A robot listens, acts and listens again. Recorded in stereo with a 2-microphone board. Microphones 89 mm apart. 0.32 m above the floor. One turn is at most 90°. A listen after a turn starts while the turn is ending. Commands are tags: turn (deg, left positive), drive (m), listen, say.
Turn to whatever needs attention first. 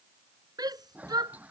<turn deg="-50"/>
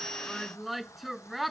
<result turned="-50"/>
<say>Facing the shout.</say>